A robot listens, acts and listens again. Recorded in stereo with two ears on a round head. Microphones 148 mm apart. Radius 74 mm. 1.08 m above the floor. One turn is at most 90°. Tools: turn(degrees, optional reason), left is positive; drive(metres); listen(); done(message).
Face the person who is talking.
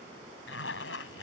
listen()
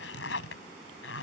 listen()
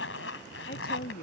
turn(degrees=55, reason="The woman speaking: about 55° left or 125° left.")
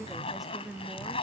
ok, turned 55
done("Facing the woman speaking.")